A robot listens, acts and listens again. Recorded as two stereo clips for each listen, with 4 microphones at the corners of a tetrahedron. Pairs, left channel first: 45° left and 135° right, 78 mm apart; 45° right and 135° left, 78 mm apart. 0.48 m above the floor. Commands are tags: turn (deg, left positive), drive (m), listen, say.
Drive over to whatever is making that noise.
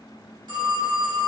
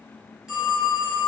<turn deg="-150"/>
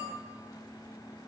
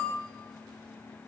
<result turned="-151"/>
<listen/>
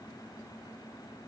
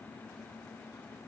<listen/>
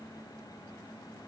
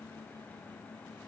<say>Facing where the phone ringing came from. I can't hear it now. I did not reach it.</say>